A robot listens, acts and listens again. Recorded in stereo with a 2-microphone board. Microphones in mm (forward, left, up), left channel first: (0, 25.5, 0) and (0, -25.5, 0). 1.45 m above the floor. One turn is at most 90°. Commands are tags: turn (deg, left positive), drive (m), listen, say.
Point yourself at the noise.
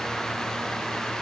<listen/>
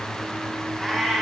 <turn deg="30"/>
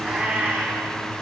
<turn deg="-25"/>
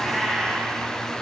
<say>Facing the cat meowing.</say>